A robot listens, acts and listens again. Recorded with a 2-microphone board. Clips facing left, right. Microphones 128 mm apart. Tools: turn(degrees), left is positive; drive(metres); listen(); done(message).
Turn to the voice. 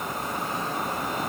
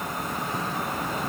listen()
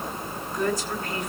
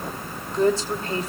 turn(degrees=-35)
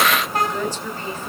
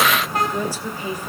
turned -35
turn(degrees=-15)
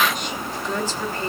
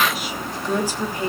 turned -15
turn(degrees=-15)
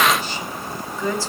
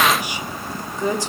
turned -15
turn(degrees=-20)
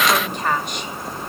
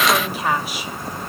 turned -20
done("Facing the woman speaking, 2 to 4 m away.")